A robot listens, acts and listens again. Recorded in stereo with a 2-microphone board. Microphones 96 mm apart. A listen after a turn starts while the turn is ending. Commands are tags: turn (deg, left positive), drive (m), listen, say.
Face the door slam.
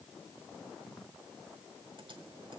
<listen/>
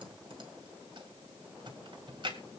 <listen/>
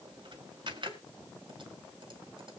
<say>I can't make out a door slam, only typing on a keyboard.</say>